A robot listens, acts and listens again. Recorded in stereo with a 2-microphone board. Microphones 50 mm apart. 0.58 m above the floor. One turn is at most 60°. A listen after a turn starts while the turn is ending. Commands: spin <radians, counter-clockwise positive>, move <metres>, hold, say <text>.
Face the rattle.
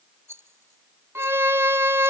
spin -1.05
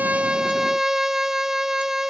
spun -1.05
hold
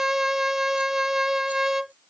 hold
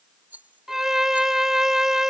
spin -0.70
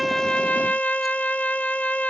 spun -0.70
hold
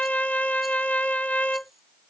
hold
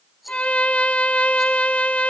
say Facing where the rattle came from. I can't hear it now.